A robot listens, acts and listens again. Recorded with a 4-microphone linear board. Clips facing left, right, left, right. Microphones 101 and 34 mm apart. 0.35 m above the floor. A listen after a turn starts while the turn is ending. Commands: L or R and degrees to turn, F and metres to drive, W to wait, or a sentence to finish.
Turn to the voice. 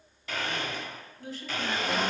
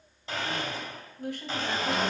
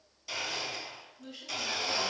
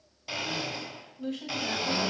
R60
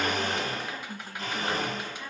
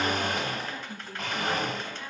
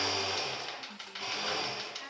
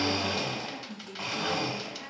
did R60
L10
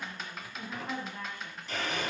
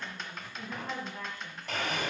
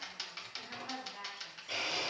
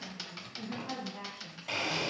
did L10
L10
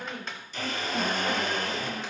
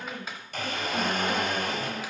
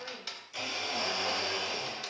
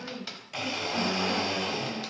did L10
L10
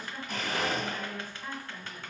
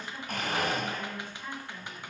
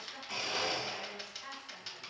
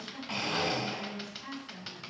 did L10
Facing the woman speaking.